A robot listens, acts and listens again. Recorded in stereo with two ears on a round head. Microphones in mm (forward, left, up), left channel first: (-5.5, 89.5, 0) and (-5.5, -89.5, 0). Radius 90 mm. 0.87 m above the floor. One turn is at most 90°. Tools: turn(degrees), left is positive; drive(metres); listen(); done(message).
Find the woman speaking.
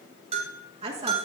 turn(degrees=-35)
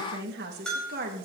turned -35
turn(degrees=-45)
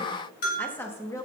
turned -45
turn(degrees=15)
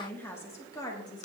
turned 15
turn(degrees=20)
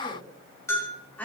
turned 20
turn(degrees=10)
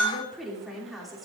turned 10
done("Facing the woman speaking, 2 to 4 m away.")